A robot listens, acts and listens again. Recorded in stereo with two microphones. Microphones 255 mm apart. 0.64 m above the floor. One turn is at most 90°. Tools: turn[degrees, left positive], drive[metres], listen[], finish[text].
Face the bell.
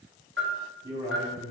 Thought: The bell: about 50° right or 130° right.
Action: turn[-50]
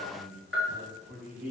Thought: So it is at 65° right.
Action: turn[-65]
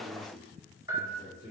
Thought: The bell is now 15° right.
Action: turn[-15]
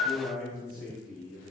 Action: finish[Facing the bell.]